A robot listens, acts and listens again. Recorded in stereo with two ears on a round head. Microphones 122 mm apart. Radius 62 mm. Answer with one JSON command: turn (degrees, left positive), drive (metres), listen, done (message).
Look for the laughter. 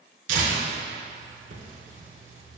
{"listen": true}
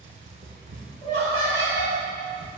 {"turn": 50}
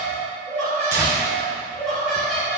{"done": "Facing the laughter."}